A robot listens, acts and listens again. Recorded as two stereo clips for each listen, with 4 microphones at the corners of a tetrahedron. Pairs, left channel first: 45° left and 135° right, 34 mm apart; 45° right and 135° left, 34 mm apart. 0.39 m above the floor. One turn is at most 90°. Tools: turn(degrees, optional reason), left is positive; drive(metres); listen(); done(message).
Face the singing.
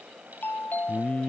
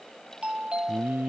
turn(degrees=90, reason="The singing: 100° left.")
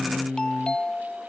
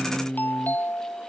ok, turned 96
done("Found it: singing, straight ahead.")